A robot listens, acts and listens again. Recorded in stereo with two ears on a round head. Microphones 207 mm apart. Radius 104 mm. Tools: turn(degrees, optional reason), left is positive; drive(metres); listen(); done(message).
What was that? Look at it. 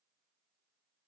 listen()
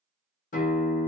turn(degrees=35, reason="The guitar: about 35° left or 145° left.")
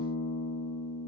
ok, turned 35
turn(degrees=100, reason="So it is at 100° left.")
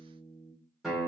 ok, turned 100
done("Found it: a guitar, straight ahead, under 1 m away.")